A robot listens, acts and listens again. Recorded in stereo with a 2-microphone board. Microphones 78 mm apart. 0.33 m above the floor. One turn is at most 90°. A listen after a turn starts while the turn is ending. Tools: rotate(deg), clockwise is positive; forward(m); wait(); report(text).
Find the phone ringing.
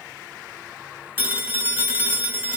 rotate(30)
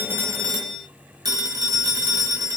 rotate(90)
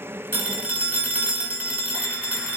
rotate(20)
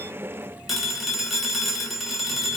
report("Found it: a phone ringing, straight ahead, under 1 m away.")